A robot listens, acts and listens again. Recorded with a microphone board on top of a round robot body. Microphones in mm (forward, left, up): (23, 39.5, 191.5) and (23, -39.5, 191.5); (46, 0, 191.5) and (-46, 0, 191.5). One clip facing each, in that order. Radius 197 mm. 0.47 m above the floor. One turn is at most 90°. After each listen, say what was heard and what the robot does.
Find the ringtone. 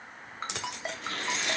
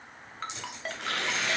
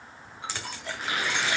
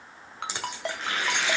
The ringtone: 170° left. Turn 90° left.
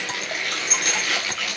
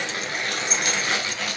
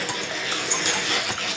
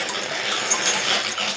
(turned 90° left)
Nothing new. It was at 80° left. Turn 80° left.
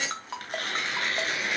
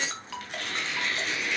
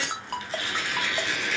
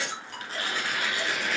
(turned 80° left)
The ringtone is now 30° left. Turn 30° left.
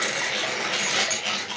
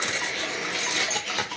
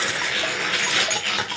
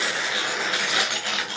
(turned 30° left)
Keep listening.
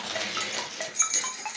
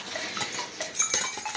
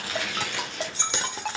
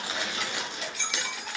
Facing the ringtone, 2 to 4 m away.